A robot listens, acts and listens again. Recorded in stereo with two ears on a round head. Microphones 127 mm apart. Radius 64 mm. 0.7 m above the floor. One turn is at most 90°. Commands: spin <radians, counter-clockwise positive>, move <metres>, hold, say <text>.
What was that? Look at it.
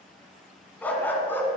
spin 0.26
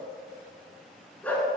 spin 0.52
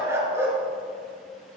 spin -0.26
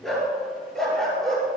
say Facing the dog barking, over 4 m away.